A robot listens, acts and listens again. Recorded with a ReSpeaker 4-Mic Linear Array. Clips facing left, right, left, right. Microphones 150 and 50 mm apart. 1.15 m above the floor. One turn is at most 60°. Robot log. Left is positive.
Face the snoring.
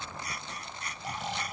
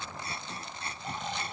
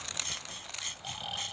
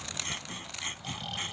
cmd yaw +30
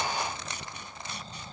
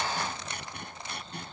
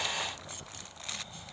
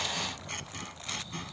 cmd idle
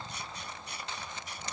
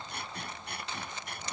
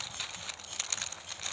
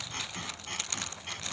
cmd idle
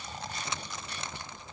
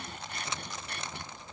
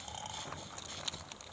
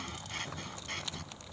note: So it is at 140° left.
cmd yaw +60
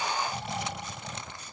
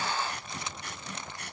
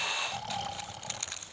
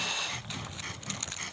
note: The snoring is now 100° left.
cmd yaw +60
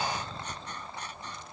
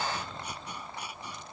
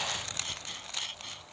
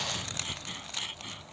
note: Nothing new. It was at 40° left.
cmd yaw +40
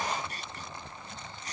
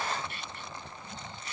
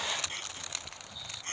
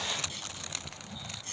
note: The snoring is now 20° right.
cmd yaw -20
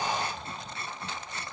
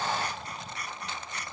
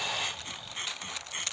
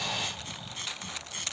cmd idle
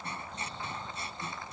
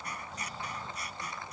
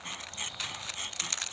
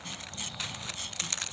cmd idle
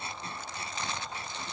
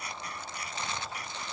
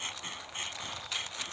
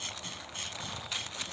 end: I heard snoring from this way, but can't make it out now.